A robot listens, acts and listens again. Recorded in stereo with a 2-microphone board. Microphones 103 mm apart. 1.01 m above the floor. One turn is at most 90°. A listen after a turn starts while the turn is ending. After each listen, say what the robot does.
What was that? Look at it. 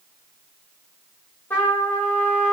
Turn 20° left.
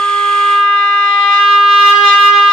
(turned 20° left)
Found it: a trumpet, straight ahead.